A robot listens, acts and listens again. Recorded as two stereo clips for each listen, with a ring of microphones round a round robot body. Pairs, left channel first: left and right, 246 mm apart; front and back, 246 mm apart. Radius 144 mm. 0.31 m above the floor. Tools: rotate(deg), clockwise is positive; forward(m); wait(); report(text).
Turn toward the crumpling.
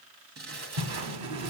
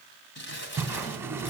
rotate(40)
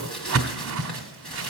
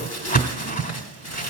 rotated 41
report("Found it: crumpling, straight ahead, 2 to 4 m away.")